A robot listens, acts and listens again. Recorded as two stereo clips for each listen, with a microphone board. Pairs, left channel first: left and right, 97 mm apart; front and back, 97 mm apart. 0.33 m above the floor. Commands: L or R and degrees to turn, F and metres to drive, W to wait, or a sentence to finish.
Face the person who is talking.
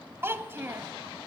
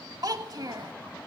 R150
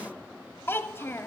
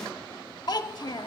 L30
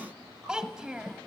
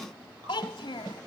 R10
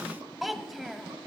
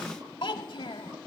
Found it: a child speaking, straight ahead, under 1 m away.